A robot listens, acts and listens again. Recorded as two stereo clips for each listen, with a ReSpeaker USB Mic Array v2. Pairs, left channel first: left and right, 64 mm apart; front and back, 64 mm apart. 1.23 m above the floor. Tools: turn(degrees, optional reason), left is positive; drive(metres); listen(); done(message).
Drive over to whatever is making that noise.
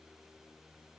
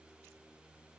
listen()
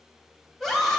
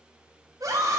turn(degrees=-175, reason="The scream: 175° right.")
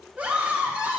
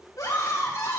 turn(degrees=-15, reason="The scream is now 15° right.")
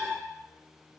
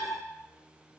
drive(metres=1.0)
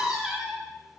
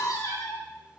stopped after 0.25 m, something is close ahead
done("Something is in my way. I am facing the scream but have not reached it.")